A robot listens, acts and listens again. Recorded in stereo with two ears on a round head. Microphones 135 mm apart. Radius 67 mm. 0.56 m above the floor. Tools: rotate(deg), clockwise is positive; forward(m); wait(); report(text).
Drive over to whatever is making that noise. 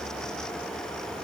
wait()
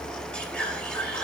rotate(-30)
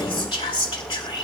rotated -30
rotate(-145)
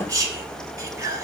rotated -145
rotate(25)
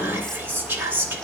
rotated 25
rotate(15)
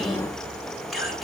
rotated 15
forward(1.0)
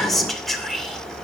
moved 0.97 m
forward(1.0)
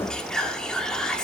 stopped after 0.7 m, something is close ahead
rotate(-10)
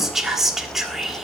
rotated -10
report("Arrived at the whispering, straight ahead.")